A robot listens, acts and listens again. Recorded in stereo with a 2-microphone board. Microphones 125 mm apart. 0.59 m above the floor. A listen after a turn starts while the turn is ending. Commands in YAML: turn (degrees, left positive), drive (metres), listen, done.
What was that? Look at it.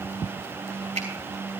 turn: -70
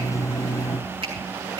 turn: -40
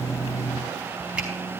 listen: true
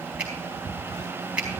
turn: -10
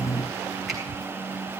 listen: true
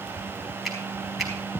done: "Facing the finger snap, over 4 m away."